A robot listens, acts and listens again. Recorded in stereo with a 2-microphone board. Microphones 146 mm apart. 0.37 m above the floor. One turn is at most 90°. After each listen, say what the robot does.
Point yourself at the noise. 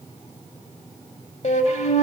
Turn 55° left.
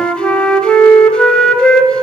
Facing the flute, under 1 m away.